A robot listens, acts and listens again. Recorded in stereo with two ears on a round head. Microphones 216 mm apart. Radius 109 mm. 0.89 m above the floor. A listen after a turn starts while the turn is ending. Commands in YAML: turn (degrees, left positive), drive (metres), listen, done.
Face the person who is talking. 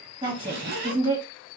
turn: -20
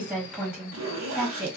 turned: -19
done: "Facing the woman speaking."